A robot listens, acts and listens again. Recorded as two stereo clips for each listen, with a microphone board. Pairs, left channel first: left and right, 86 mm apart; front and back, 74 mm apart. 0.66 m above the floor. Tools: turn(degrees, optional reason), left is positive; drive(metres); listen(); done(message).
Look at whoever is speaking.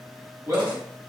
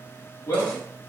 turn(degrees=-40, reason="The man speaking: 40° right.")
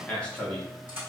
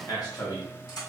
turn(degrees=15, reason="The man speaking is now 15° left.")
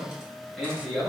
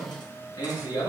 done("Found it: a man speaking, straight ahead.")